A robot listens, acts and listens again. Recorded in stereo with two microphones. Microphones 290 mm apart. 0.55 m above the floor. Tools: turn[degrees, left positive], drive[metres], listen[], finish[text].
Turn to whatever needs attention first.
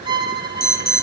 Thought: The alarm: about 30° left or 150° left.
Action: turn[30]
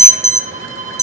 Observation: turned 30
Thought: So it is at 10° left.
Action: turn[10]
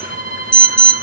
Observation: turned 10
Action: finish[Found it: an alarm, straight ahead, 1 to 2 m away.]